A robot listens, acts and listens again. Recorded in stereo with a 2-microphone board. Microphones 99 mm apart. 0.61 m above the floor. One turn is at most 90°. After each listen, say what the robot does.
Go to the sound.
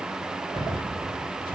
Turn 65° left.
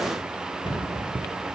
Turn 50° left.
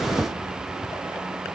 Keep listening.
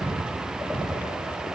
Drive 1.0 m forward.
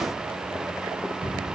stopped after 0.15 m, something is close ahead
Something is in my way. I am facing the cupboard door but have not reached it.